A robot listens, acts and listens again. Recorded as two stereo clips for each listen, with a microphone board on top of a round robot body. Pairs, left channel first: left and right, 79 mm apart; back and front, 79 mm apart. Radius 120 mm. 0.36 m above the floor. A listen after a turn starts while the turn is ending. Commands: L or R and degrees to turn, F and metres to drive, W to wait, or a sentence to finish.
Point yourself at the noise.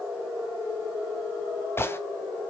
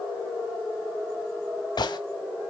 L150
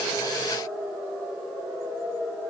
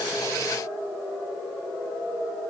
I heard a gunshot from this way, but can't make it out now.